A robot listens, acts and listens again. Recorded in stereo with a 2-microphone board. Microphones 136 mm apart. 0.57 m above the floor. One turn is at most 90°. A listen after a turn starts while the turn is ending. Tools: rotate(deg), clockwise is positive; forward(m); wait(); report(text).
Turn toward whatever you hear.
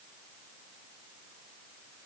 wait()
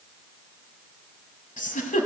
rotate(-90)
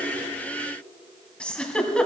rotate(-10)
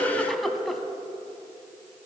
report("Facing the giggle.")